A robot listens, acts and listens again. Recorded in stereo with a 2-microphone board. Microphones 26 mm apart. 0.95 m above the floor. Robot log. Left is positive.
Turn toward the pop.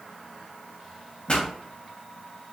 note: The pop: about 40° left or 140° left.
cmd yaw +40
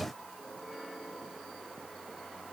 cmd idle
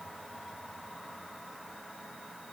end: I heard a pop, but can't make it out now. It was about straight ahead or 100° left.